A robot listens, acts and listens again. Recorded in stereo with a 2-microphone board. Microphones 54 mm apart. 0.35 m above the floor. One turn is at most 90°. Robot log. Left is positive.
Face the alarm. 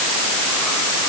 cmd idle
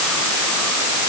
cmd idle
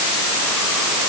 end: I can't make out an alarm.